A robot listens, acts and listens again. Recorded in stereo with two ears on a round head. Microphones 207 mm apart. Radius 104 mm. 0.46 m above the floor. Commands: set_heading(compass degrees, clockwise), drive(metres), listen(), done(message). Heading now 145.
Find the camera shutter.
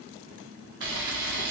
set_heading(195)
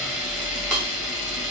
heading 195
done("Facing the camera shutter.")